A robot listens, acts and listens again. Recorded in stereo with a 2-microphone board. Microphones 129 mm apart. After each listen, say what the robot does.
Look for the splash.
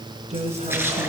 Turn 15° right.
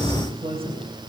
Keep listening.
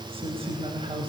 I heard a splash, but can't make it out now. It was about straight ahead or 150° right.